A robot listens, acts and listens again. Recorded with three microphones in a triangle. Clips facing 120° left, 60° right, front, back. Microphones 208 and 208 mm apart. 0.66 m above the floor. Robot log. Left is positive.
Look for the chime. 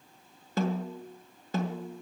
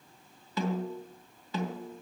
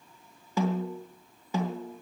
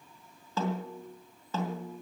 cmd idle
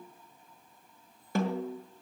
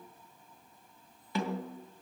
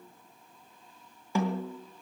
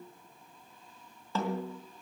cmd idle
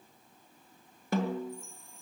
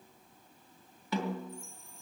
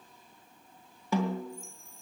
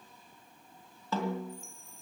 note: The chime: 150° right.
cmd yaw -150
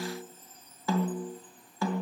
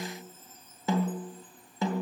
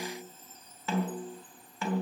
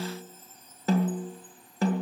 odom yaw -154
end: Facing the chime.